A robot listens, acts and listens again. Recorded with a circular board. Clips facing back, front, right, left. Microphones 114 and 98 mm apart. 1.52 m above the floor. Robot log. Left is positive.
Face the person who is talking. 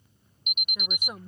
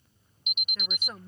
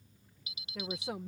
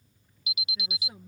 note: The woman speaking: 105° right.
cmd yaw -105
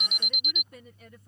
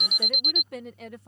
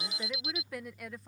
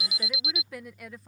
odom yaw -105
end: Facing the woman speaking.